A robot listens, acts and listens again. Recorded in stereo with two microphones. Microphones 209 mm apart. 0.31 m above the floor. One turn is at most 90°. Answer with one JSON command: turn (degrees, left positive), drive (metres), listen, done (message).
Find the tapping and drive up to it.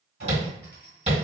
{"turn": -30}
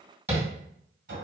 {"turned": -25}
{"turn": -15}
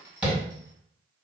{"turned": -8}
{"drive": 1.0}
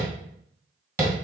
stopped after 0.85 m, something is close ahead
{"turn": -15}
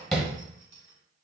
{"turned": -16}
{"done": "I am next to the tapping."}